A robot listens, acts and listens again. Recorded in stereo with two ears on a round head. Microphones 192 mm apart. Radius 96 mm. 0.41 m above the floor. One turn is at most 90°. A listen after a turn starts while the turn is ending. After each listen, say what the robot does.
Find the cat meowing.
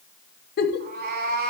Turn 45° right.
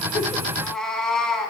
Found it: a cat meowing, straight ahead.